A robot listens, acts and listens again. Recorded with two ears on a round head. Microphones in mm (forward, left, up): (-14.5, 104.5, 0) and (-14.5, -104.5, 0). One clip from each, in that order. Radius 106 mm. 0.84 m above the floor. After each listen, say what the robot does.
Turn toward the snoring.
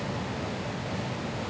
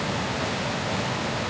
Keep listening.
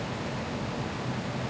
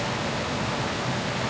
Keep listening.
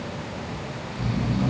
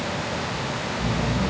Turn 70° left.
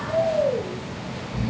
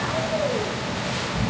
Turn 20° left.
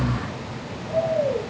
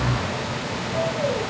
Found it: snoring, straight ahead.